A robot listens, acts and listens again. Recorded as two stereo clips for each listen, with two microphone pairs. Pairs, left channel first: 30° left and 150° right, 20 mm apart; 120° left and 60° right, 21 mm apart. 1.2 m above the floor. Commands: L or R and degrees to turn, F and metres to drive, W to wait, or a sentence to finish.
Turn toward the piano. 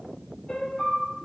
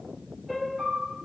L20
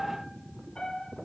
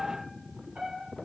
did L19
Found it: a piano, straight ahead, 2 to 4 m away.